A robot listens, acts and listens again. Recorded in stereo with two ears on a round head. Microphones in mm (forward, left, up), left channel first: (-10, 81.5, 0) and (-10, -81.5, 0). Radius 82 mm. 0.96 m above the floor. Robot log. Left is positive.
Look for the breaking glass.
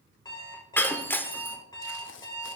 cmd yaw +30
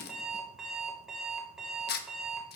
cmd idle
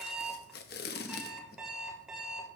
end: I heard breaking glass, but can't make it out now. It was about 20° right or 140° left.